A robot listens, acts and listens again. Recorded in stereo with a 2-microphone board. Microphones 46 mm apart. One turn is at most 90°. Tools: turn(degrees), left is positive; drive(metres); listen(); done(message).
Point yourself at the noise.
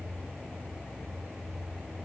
listen()
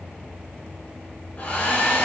turn(degrees=35)
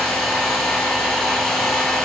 done("Facing the hair dryer, 2 to 4 m away.")